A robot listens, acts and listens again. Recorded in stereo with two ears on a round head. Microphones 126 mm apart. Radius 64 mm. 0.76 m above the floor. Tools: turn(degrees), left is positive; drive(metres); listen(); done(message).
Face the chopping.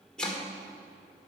turn(degrees=30)
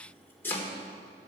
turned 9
turn(degrees=15)
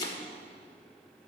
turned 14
turn(degrees=150)
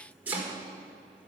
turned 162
turn(degrees=-10)
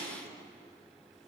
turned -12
listen()
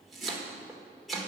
done("Found it: chopping, straight ahead, 1 to 2 m away.")